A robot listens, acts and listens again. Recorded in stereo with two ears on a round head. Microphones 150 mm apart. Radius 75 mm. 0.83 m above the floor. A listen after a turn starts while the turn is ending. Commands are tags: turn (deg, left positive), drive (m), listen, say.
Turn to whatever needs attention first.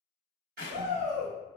<turn deg="-45"/>
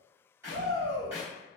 <turn deg="-85"/>
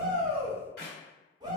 <turn deg="-25"/>
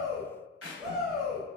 <say>Facing the shout, 1 to 2 m away.</say>